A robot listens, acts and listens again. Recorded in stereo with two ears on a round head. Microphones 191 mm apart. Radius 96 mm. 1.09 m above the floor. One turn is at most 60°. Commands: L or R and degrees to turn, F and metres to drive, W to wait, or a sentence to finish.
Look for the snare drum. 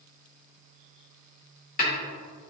L40
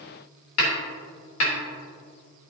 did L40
L60
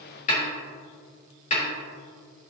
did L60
L35
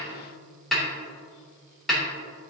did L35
Facing the snare drum.